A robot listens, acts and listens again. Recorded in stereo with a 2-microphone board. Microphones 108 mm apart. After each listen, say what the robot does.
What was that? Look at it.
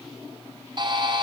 Turn 45° right.
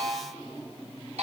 Turn 90° right.
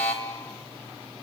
Turn 15° left.
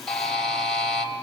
Facing the buzzer.